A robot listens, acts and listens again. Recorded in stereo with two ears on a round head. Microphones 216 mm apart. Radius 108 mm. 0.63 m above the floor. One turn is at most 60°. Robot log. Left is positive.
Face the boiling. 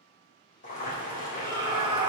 note: The boiling: about 40° left or 140° left.
cmd yaw +40
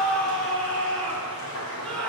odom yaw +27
note: So it is at 110° left.
cmd yaw +60
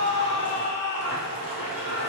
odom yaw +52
note: The boiling is now 60° left.
cmd yaw +60
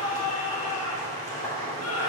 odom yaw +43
note: The boiling is now 15° left.
cmd yaw +15
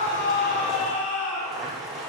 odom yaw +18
end: Found it: boiling, straight ahead.